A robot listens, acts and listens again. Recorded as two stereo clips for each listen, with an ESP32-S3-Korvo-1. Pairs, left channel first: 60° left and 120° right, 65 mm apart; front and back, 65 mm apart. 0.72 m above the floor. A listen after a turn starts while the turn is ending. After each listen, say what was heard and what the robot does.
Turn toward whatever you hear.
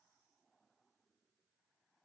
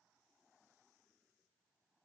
Keep listening.
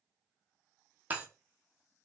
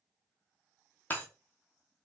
The breaking glass: 60° right. Turn 60° right.
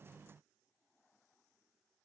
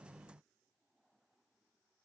Facing where the breaking glass came from. I can't hear it now.